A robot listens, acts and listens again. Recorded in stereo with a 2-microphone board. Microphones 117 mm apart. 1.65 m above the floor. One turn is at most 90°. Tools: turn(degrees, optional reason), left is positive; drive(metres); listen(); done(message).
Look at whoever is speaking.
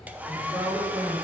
turn(degrees=-20, reason="The woman speaking: about 20° right or 160° right.")
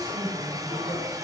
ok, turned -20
done("Facing the woman speaking.")